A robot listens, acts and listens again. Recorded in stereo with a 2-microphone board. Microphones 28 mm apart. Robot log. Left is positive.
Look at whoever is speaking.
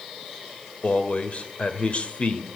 note: The man speaking: about 50° left or 130° left.
cmd yaw +50
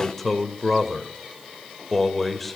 note: So it is at 10° left.
cmd yaw +10
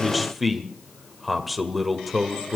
end: Found it: a man speaking, straight ahead.